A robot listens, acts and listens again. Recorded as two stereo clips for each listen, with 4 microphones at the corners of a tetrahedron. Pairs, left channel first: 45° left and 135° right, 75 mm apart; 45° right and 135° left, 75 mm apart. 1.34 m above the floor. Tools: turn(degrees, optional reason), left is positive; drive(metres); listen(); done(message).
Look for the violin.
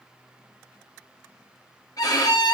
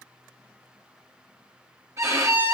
turn(degrees=85, reason="The violin: 85° left.")
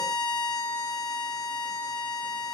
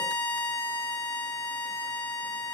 turn(degrees=20, reason="The violin is now 20° left.")
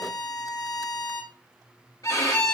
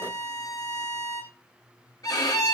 done("Found it: a violin, straight ahead, 1 to 2 m away.")